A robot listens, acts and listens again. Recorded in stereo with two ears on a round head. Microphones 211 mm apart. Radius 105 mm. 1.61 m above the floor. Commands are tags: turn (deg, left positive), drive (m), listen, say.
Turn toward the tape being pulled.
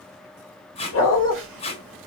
<turn deg="25"/>
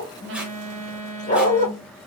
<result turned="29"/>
<listen/>
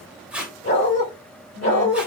<say>Facing the tape being pulled, 1 to 2 m away.</say>